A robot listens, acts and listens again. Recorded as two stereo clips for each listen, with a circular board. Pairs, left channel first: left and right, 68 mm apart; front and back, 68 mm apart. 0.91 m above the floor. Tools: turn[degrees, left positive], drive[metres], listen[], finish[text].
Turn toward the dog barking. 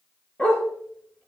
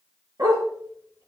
Thought: The dog barking: 160° left.
Action: turn[160]
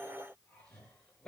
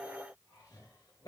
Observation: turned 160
Action: listen[]
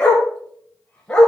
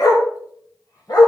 Thought: The dog barking is now 10° left.
Action: turn[10]
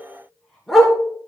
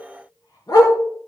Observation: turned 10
Action: finish[Found it: a dog barking, straight ahead.]